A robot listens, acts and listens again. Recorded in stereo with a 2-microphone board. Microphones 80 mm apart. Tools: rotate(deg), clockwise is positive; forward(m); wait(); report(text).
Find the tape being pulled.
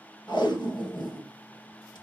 rotate(-70)
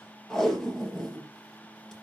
report("Found it: tape being pulled, straight ahead.")